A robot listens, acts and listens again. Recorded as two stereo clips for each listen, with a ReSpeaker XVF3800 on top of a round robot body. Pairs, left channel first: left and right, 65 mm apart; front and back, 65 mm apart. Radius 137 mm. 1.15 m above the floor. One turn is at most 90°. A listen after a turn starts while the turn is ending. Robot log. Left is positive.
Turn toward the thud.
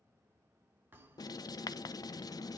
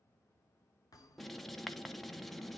note: The thud: 30° right.
cmd yaw -30
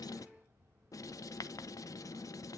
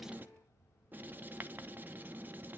end: Facing where the thud came from. I can't hear it now.